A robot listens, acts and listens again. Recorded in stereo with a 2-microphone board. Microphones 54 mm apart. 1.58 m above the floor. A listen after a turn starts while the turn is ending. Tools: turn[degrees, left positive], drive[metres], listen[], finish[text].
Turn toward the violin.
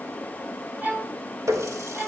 Thought: The violin: about 30° right or 150° right.
Action: turn[-30]
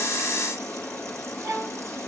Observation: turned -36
Thought: So it is at 115° right.
Action: turn[-115]
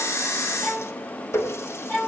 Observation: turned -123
Thought: The violin is now 10° left.
Action: turn[10]
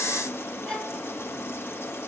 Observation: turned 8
Action: finish[Facing the violin.]